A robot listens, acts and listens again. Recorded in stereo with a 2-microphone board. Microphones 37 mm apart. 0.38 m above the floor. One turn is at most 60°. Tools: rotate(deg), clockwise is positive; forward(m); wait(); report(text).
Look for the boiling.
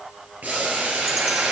rotate(55)
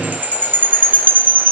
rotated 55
wait()
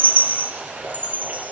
rotate(60)
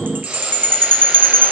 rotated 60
rotate(10)
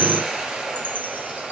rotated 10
rotate(25)
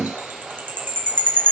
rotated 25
rotate(20)
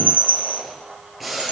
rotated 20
report("Found it: boiling, straight ahead, 2 to 4 m away.")